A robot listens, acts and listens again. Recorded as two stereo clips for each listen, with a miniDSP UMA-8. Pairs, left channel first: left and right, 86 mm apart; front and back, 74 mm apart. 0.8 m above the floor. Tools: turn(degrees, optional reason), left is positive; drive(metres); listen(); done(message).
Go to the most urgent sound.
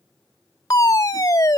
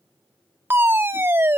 turn(degrees=130, reason="The fire alarm: 130° left.")
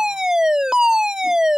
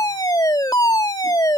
turn(degrees=-10, reason="The fire alarm is now 10° right.")
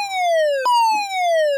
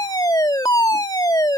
drive(metres=1.0)
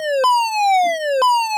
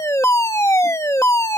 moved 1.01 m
drive(metres=1.0)
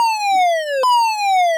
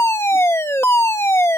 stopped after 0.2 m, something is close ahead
done("Arrived at the fire alarm, straight ahead.")